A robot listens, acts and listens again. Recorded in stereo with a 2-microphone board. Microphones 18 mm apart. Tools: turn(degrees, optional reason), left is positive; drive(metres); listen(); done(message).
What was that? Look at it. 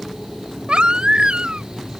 turn(degrees=-60, reason="The baby crying: about 60° right or 120° right.")
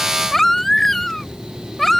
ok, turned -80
turn(degrees=20, reason="So it is at 20° left.")
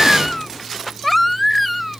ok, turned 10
turn(degrees=10, reason="The baby crying is now 10° left.")
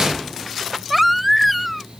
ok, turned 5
done("Found it: a baby crying, straight ahead.")